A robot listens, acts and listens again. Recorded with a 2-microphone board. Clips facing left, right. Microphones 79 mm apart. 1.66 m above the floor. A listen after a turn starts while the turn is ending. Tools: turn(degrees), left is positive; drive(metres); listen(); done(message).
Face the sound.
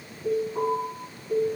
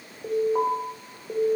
turn(degrees=-50)
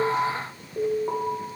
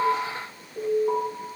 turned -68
turn(degrees=20)
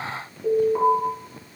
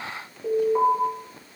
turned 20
done("Found it: an alarm, straight ahead, 1 to 2 m away.")